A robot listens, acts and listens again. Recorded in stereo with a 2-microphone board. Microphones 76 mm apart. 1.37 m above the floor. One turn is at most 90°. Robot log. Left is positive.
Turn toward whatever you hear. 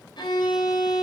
cmd yaw +90
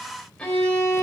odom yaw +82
note: So it is at 10° left.
cmd yaw +10
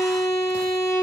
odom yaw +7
end: Found it: a violin, straight ahead.